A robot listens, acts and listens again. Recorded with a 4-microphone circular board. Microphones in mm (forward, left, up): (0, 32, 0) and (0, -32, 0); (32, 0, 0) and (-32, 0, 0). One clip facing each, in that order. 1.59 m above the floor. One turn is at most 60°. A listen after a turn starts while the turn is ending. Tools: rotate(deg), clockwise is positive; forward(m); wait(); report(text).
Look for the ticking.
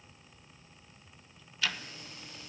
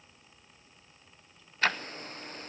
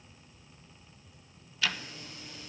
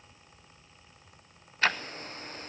rotate(60)
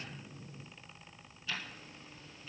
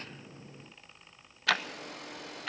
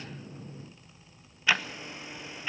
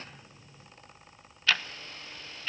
rotate(60)
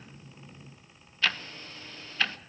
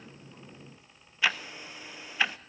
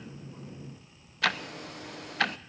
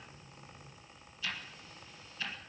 rotate(15)
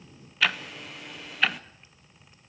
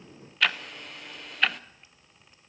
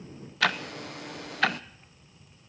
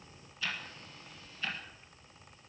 report("Facing the ticking.")